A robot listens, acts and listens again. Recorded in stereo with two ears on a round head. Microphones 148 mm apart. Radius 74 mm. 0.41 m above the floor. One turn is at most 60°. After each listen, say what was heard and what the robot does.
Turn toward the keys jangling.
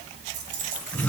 Turn 60° right.
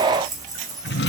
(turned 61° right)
So it is at 25° right. Turn 25° right.
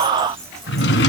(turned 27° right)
Keep listening.
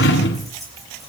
Facing the keys jangling.